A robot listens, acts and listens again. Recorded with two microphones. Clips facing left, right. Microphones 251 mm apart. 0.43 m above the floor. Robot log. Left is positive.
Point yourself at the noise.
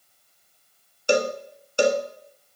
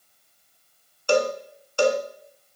note: The cowbell: about 20° left or 160° left.
cmd yaw +20
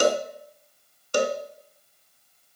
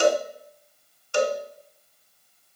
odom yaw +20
note: So it is at 135° left.
cmd yaw +135
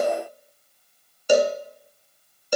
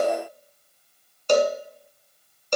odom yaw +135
note: The cowbell is now 10° left.
cmd yaw +10
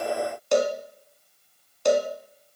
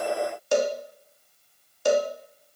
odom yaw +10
end: Found it: a cowbell, straight ahead.